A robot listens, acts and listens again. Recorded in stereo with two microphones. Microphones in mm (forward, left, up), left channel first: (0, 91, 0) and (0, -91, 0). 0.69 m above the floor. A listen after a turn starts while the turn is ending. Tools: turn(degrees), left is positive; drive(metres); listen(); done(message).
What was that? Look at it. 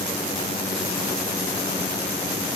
listen()
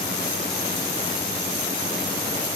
listen()
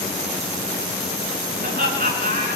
turn(degrees=-55)
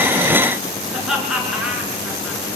done("Found it: laughter, straight ahead.")